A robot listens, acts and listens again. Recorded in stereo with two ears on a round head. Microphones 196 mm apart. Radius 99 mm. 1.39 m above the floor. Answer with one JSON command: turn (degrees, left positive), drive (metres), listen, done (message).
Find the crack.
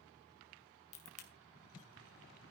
{"turn": 35}
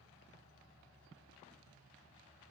{"listen": true}
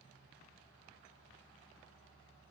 {"done": "I heard a crack, but can't make it out now. It was about straight ahead or 110° left."}